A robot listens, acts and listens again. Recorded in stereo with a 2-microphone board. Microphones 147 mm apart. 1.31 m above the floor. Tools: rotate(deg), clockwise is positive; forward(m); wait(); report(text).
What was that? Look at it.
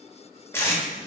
rotate(-20)
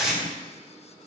report("Facing the tape being pulled, 1 to 2 m away.")